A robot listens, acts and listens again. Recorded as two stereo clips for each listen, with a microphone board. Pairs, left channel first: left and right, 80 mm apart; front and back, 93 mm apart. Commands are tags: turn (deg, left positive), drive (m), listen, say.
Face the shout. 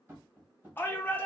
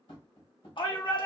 <turn deg="25"/>
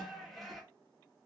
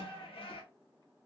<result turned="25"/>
<say>Found it: a shout, straight ahead.</say>